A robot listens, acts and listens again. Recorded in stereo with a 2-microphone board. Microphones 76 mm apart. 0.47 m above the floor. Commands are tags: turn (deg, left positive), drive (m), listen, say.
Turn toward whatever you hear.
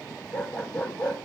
<turn deg="30"/>
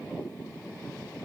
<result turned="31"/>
<listen/>
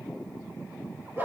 <turn deg="-30"/>
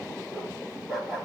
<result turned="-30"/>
<turn deg="-10"/>
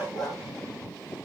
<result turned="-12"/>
<say>Facing the dog barking, over 4 m away.</say>